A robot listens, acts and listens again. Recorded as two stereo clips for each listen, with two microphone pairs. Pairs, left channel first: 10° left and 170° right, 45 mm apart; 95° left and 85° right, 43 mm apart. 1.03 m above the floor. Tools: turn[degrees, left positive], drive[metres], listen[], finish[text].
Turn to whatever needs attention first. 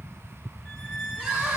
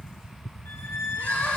Thought: The crying: 140° left.
Action: turn[140]
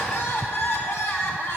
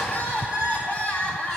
Thought: The crying is now 40° left.
Action: turn[40]
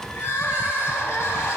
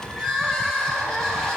Thought: The crying is now 20° left.
Action: turn[20]
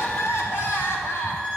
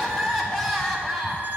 Action: finish[Found it: crying, straight ahead, 1 to 2 m away.]